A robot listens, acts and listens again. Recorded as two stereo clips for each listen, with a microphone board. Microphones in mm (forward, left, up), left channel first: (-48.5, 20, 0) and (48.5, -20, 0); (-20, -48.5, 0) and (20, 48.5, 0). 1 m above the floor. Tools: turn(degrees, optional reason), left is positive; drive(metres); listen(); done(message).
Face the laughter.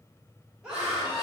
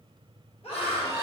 turn(degrees=-110, reason="The laughter: 110° right.")
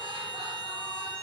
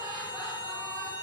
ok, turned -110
listen()
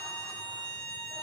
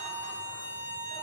listen()
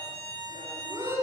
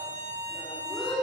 turn(degrees=-80, reason="The laughter is now 80° right.")
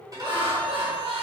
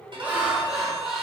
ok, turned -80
turn(degrees=-15, reason="The laughter is now 15° right.")
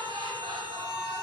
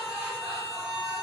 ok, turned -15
listen()
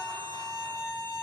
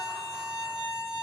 listen()
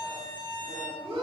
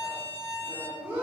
done("Facing the laughter.")